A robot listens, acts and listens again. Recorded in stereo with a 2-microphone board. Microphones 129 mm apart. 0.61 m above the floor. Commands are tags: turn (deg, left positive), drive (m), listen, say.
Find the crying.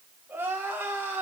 <turn deg="-15"/>
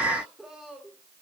<say>Found it: crying, straight ahead, 1 to 2 m away.</say>